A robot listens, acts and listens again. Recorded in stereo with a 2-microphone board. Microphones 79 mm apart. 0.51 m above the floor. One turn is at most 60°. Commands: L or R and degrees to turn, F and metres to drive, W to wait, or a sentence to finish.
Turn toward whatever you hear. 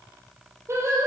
R35
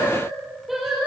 Found it: singing, straight ahead.